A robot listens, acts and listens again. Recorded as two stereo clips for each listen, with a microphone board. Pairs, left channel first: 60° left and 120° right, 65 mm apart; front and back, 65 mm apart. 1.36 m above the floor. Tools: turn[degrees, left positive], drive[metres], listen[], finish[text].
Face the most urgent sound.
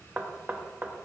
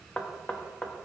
Action: listen[]
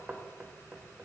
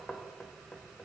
Action: listen[]
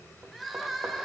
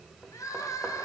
Thought: The crying: 30° right.
Action: turn[-30]
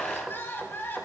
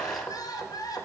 Action: finish[Facing the crying.]